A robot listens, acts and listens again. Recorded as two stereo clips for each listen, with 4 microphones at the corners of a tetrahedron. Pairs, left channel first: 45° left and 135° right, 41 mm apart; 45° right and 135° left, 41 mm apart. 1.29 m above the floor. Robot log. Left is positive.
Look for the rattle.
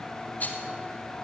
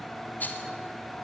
end: Found it: a rattle, straight ahead.